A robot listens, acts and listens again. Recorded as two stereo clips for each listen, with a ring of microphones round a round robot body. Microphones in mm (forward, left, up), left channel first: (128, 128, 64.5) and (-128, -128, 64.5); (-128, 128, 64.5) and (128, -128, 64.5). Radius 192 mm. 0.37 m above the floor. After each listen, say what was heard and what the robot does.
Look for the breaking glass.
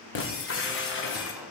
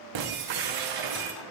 The breaking glass: 15° right. Turn 15° right.
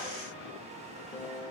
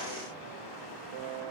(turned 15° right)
Facing where the breaking glass came from. I can't hear it now.